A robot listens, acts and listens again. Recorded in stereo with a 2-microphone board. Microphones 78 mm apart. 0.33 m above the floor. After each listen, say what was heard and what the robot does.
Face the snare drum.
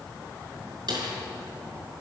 The snare drum: about 60° right or 120° right. Turn 60° right.
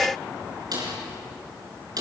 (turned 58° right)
So it is at 60° right. Turn 60° right.
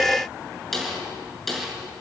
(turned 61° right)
Found it: a snare drum, straight ahead.